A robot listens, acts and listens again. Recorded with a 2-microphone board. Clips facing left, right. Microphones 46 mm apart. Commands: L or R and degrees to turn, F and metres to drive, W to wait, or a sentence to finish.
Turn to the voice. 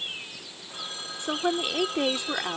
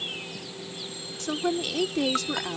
L20
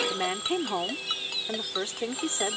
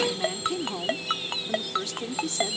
L140
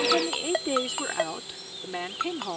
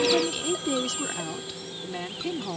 L20
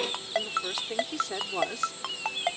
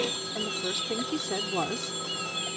Found it: a woman speaking, straight ahead.